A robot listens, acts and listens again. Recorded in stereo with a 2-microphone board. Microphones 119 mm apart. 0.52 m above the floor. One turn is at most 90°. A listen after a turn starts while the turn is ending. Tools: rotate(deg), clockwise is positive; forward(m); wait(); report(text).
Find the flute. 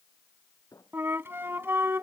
rotate(20)
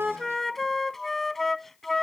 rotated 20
report("Facing the flute.")